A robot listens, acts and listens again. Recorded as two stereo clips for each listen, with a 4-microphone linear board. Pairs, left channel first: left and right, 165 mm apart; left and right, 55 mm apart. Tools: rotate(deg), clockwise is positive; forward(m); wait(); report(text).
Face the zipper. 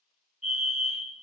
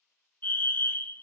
wait()
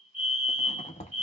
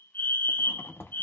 rotate(-45)
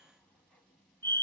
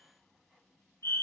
wait()
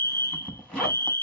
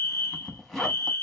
report("Facing the zipper.")